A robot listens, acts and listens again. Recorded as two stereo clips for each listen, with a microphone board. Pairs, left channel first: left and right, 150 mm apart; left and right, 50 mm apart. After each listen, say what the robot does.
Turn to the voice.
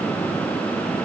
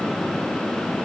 Keep listening.
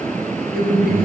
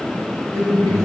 Turn 75° right.
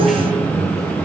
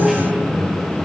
Found it: a man speaking, straight ahead.